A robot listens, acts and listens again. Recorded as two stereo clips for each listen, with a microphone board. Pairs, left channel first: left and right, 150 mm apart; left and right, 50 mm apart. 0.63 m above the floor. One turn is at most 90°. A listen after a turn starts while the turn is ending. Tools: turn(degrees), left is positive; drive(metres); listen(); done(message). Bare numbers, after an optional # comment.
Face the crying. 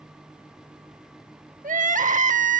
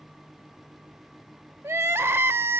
# The crying: about 55° right or 125° right.
turn(-55)
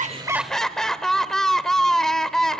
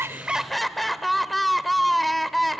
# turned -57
done("Facing the crying, under 1 m away.")